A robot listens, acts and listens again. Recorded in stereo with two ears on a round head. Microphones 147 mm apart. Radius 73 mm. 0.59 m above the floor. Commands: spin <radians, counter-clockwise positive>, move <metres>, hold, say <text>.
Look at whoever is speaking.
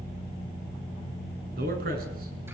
spin -1.05
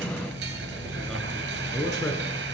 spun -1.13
say Found it: a man speaking, straight ahead.